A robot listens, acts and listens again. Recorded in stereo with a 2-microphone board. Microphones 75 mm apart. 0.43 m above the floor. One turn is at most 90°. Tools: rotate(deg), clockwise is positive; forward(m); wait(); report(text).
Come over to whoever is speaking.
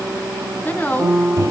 rotate(-20)
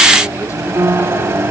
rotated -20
wait()
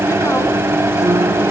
wait()
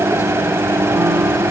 report("I heard a woman speaking, but can't make it out now. It was about straight ahead or 140° left. I did not reach it.")